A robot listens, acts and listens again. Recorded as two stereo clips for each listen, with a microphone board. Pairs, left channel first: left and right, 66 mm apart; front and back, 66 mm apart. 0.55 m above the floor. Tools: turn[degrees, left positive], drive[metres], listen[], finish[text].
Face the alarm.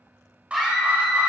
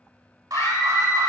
Thought: The alarm: 160° right.
Action: turn[-160]
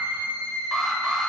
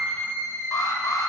Thought: The alarm is now 10° right.
Action: turn[-10]
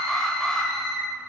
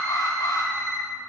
Action: finish[Facing the alarm, 1 to 2 m away.]